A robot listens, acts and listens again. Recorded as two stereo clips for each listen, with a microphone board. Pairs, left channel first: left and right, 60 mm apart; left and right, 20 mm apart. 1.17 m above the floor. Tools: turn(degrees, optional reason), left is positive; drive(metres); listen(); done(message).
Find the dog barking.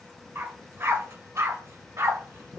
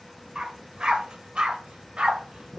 turn(degrees=-60, reason="The dog barking: about 60° right or 120° right.")
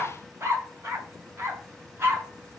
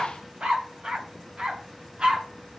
turn(degrees=-45, reason="So it is at 45° right.")
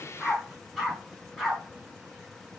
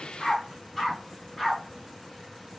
done("Facing the dog barking, over 4 m away.")